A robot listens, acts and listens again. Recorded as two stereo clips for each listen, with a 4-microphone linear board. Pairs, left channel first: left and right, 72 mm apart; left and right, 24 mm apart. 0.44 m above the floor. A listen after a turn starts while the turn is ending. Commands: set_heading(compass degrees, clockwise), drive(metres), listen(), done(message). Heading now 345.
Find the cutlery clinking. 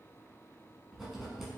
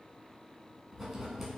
listen()
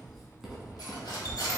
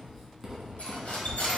set_heading(255)
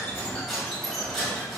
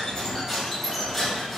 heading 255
done("Found it: cutlery clinking, straight ahead, 1 to 2 m away.")